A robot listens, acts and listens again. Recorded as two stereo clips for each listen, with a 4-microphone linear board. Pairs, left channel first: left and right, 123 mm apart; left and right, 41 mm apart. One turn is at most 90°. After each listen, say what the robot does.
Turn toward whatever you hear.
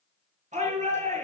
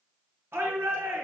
Turn 90° right.
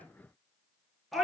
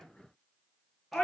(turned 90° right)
Facing the shout.